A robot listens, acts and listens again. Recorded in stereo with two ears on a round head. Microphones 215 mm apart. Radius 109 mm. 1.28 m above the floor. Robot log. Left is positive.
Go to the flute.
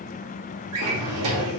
cmd idle
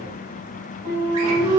note: The flute: about 35° right or 145° right.
cmd yaw -35
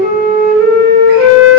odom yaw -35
cmd fwd 1.0
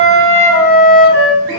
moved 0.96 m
note: The flute is now 10° right.
cmd yaw -10
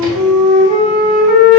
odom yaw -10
cmd fwd 1.0
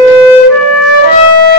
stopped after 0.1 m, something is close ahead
note: The flute is now 10° right.
cmd yaw -10
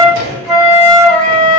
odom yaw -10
end: I am next to the flute.